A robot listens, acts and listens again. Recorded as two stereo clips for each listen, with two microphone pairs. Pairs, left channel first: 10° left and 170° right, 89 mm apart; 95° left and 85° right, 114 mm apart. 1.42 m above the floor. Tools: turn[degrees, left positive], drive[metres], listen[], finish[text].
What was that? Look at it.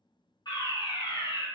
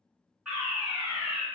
Action: finish[Facing the fire alarm, 1 to 2 m away.]